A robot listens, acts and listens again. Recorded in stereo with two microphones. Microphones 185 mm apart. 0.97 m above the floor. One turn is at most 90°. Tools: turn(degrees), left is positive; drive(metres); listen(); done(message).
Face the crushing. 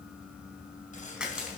turn(degrees=-30)
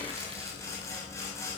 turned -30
listen()
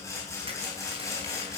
listen()
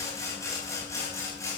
done("I heard crushing, but can't make it out now. It was about 25° left or 145° right.")